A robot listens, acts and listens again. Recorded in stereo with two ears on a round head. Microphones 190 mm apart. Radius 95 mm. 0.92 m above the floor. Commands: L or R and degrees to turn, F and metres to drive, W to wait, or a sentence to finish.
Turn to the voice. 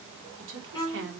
R55
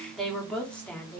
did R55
L10
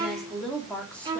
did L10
Facing the woman speaking.